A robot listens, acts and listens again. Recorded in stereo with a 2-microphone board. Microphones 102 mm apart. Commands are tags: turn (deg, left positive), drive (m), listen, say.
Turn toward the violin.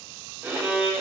<turn deg="-25"/>
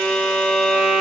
<say>Found it: a violin, straight ahead.</say>